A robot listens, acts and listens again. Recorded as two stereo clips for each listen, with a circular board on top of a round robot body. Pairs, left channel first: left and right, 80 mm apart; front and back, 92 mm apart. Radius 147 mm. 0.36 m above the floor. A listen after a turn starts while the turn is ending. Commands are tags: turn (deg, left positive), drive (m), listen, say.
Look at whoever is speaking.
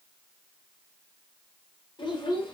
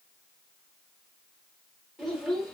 <turn deg="95"/>
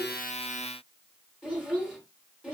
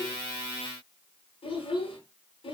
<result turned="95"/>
<say>Found it: a child speaking, straight ahead.</say>